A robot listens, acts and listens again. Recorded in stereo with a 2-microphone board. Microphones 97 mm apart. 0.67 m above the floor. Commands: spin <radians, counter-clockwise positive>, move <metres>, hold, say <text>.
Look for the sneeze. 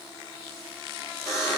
hold
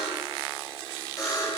hold
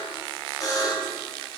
say I can't make out a sneeze to turn to.